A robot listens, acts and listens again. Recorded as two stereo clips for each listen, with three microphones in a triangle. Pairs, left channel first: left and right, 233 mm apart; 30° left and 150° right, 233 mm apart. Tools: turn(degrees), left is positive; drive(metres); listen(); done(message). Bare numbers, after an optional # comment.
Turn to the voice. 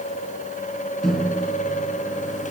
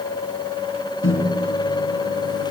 listen()
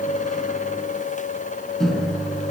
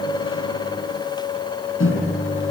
listen()
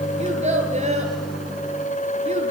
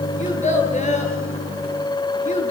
# The child speaking: 30° right.
turn(-30)
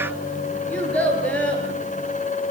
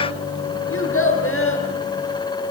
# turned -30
done("Facing the child speaking.")